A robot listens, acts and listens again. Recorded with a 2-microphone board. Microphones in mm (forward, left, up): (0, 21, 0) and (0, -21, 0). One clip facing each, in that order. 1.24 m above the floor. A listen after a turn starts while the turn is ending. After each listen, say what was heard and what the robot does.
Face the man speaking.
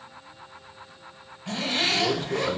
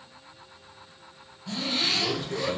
The man speaking: about 55° left or 125° left. Turn 55° left.
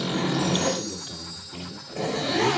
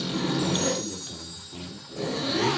Facing the man speaking.